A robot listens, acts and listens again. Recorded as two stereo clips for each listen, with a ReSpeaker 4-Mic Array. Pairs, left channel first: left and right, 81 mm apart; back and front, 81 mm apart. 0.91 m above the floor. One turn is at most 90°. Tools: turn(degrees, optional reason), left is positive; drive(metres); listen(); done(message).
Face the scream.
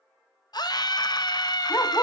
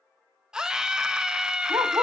turn(degrees=80, reason="The scream: 80° left.")
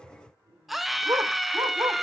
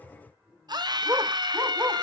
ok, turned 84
done("Facing the scream, under 1 m away.")